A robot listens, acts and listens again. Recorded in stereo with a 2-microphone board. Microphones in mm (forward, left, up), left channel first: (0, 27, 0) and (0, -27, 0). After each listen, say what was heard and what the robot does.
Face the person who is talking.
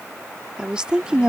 The woman speaking: about 15° right or 165° right. Turn 15° right.
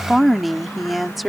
Found it: a woman speaking, straight ahead.